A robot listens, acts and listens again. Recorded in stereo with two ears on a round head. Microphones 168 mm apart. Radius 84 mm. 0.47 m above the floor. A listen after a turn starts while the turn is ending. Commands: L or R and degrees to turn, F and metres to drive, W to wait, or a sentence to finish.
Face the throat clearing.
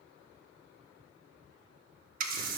W
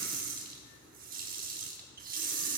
W
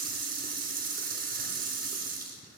I can't make out throat clearing to turn to.